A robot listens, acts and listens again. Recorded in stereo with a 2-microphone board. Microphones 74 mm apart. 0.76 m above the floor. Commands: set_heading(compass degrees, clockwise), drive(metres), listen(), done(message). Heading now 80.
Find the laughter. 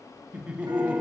set_heading(95)
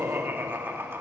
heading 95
set_heading(245)
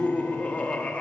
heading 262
set_heading(242)
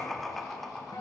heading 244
done("Found it: laughter, straight ahead, 1 to 2 m away.")